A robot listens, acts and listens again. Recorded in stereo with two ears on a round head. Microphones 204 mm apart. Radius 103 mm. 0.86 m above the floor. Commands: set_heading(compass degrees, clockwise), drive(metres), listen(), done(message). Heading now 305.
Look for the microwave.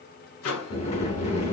set_heading(240)
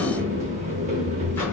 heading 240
listen()
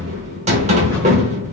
listen()
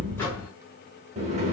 done("I heard a microwave, but can't make it out now. It was about straight ahead or 50° left.")